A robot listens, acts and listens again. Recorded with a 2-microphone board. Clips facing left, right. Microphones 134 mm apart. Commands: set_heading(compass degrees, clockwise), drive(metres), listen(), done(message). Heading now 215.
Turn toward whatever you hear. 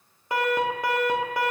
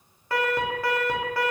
set_heading(195)
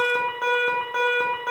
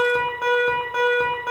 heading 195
done("Facing the alarm, under 1 m away.")